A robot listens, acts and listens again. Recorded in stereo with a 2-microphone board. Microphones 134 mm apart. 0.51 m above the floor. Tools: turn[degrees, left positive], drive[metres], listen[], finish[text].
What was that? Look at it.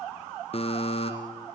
Thought: The buzzer: about 50° left or 130° left.
Action: turn[50]
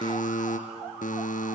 Thought: So it is at 80° left.
Action: turn[80]
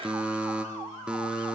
Thought: The buzzer is now 10° right.
Action: turn[-10]
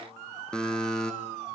Action: finish[Facing the buzzer, 2 to 4 m away.]